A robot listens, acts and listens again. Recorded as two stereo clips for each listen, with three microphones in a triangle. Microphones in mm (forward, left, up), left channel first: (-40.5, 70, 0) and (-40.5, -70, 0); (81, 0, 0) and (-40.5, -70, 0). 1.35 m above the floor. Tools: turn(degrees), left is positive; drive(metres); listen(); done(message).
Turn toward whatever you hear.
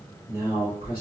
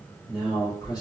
turn(degrees=90)
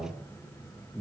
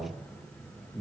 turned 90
turn(degrees=30)
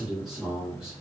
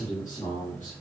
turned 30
done("Found it: a man speaking, straight ahead, 1 to 2 m away.")